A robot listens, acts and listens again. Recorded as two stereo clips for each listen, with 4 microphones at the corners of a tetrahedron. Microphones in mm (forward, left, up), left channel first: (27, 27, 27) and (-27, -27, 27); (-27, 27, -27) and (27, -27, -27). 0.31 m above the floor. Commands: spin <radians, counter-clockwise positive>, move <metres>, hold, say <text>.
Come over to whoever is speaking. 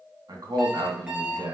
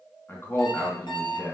spin -2.88
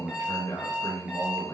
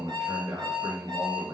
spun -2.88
spin -0.17
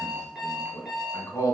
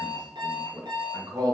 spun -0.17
move 1.0
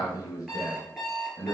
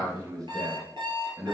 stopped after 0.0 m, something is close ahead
say Something is in my way. I am facing the man speaking but have not reached it.